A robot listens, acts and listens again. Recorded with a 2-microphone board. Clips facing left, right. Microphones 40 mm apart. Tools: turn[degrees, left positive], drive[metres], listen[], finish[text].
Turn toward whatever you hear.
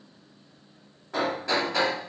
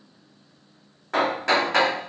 Thought: The hammering: about 70° right or 110° right.
Action: turn[-70]
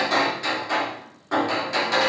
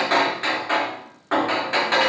Thought: So it is at 35° right.
Action: turn[-35]
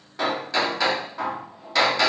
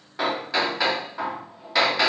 Thought: The hammering is now 10° right.
Action: turn[-10]
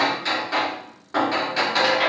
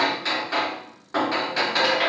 Action: finish[Facing the hammering, 2 to 4 m away.]